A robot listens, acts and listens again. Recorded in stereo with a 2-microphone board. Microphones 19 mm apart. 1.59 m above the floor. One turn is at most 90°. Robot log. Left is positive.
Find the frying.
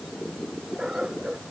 cmd idle
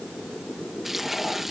note: The frying: about 15° right or 165° right.
cmd yaw -15
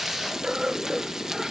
note: So it is at 145° right.
cmd yaw -90
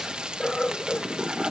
note: The frying is now 60° right.
cmd yaw -60
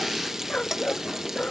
note: The frying is now 25° right.
cmd yaw -25
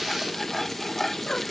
note: The frying is now 15° left.
cmd yaw +15
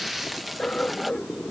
end: Facing the frying.